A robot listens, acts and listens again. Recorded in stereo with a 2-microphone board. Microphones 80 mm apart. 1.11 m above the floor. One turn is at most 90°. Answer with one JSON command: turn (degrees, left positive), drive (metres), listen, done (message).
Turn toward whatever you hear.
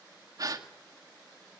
{"turn": -50}
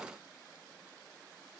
{"listen": true}
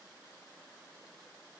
{"done": "I heard a gasp, but can't make it out now. It was about straight ahead or 80° right."}